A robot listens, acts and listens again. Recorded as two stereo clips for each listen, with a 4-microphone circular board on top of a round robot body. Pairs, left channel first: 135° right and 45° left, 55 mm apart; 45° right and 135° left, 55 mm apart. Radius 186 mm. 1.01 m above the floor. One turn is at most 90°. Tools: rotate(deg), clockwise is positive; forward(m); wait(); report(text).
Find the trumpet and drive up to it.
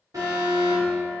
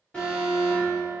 wait()
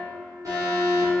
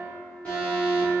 wait()
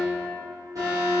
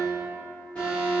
report("I can't make out a trumpet to turn to.")